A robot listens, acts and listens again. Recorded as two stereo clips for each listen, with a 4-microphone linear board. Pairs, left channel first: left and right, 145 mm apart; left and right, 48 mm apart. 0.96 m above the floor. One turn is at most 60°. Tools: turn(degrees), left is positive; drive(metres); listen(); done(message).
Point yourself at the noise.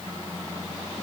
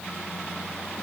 listen()
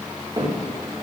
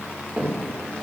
turn(degrees=-30)
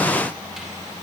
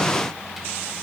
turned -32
listen()
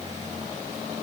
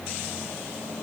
listen()
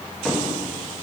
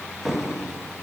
done("Found it: a cupboard door, straight ahead, 1 to 2 m away.")